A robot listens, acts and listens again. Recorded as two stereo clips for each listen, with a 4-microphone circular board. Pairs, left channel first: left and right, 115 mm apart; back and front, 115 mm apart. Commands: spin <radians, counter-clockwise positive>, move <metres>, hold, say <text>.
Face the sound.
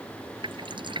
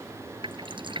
spin -0.79
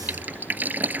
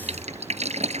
spin -0.26
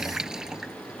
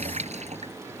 say Facing the dripping.